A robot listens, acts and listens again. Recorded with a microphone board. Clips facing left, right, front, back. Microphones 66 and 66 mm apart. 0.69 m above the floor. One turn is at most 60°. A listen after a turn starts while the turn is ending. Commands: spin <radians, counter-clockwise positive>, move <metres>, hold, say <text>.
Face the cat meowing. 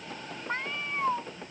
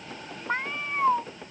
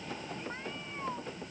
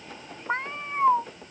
spin -1.05
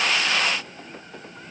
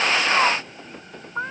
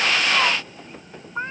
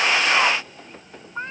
spin -1.05
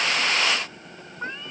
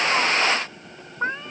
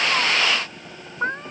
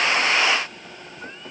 spin -0.61
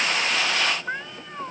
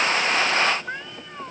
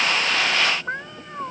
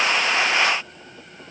spin 0.17
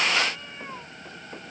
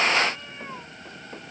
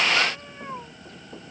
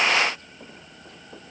hold
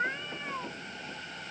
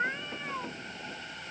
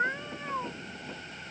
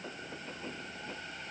say Found it: a cat meowing, straight ahead.